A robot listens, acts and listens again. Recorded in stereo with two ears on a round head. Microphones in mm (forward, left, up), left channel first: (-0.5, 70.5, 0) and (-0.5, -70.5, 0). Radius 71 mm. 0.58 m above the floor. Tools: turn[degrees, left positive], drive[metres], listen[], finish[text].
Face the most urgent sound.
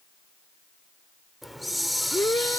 Thought: The shout: about 15° left or 165° left.
Action: turn[15]
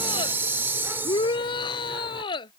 Thought: So it is at 150° left.
Action: turn[150]
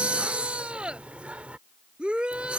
Action: finish[Facing the shout.]